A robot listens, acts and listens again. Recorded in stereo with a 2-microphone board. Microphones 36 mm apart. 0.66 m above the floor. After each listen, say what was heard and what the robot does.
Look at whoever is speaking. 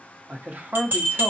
The man speaking: about 50° right or 130° right. Turn 50° right.
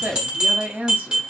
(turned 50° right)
So it is at 70° right. Turn 70° right.
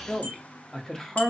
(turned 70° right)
The man speaking is now 20° left. Turn 20° left.
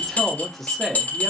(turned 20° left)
The man speaking is now 10° left. Turn 10° left.
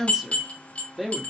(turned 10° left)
Facing the man speaking.